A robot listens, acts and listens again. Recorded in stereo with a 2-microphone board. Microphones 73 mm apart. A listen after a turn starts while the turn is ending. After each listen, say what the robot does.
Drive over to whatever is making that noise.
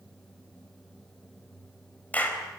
Turn 20° left.
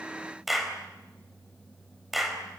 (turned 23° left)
Drive 1.0 m forward.
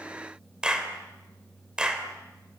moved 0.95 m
Turn 10° right.
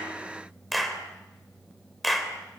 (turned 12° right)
Drive 1.0 m forward.
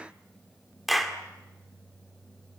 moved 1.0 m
Drive 1.0 m forward.
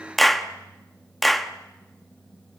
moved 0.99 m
Drive 1.0 m forward.
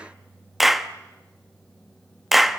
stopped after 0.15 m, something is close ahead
I am next to the clap.